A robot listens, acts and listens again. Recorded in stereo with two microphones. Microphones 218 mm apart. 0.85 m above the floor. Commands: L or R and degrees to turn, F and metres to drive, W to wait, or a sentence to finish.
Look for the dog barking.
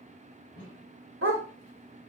R70
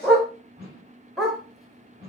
Facing the dog barking, 1 to 2 m away.